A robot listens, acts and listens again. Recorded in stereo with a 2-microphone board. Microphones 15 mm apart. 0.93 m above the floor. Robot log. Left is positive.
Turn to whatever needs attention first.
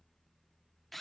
cmd idle
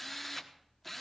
cmd idle
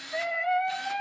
note: The scream: about 30° left or 150° left.
cmd yaw +30
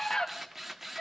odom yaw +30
note: So it is at 115° left.
cmd yaw +115
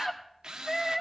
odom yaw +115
note: The scream is now 25° left.
cmd yaw +25
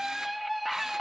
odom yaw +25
end: Facing the scream, 1 to 2 m away.